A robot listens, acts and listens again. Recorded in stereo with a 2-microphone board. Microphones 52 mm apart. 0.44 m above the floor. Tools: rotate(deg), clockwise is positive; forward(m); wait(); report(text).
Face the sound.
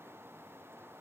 wait()
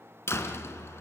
rotate(-60)
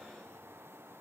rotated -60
wait()
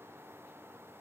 report("I heard a door slam, but can't make it out now. It was about straight ahead or 60° left.")